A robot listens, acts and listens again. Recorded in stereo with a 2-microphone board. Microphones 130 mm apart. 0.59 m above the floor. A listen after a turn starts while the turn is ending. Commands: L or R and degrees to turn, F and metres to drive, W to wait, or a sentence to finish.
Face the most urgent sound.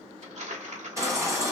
R25
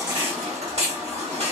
R125
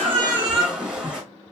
R10
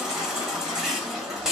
Found it: a baby crying, straight ahead.